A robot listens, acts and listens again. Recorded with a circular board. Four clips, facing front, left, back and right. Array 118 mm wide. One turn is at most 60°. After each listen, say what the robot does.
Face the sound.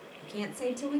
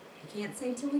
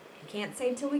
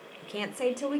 Turn 60° right.
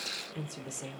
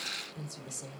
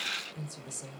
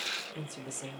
Turn 45° right.
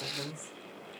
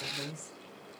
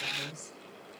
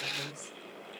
Turn 20° left.
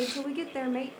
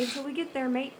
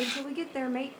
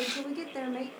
Turn 60° left.
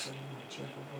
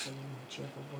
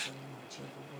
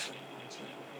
Turn 60° left.
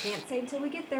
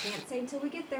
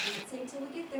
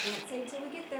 Turn 10° left.
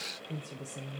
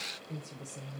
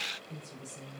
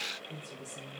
Found it: a woman speaking, straight ahead, 1 to 2 m away.